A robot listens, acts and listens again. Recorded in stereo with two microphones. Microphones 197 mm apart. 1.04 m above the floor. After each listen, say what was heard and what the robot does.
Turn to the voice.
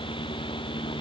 Keep listening.
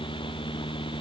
Keep listening.
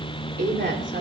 The woman speaking: about 65° right or 115° right. Turn 65° right.
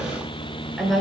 Facing the woman speaking.